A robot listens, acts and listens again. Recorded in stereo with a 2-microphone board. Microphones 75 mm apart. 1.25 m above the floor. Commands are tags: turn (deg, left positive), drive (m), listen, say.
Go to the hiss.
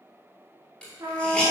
<turn deg="15"/>
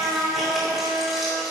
<listen/>
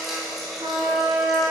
<drive m="1.0"/>
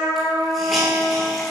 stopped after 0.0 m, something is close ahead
<listen/>
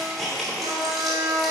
<say>Something is in my way. I am facing the hiss but have not reached it.</say>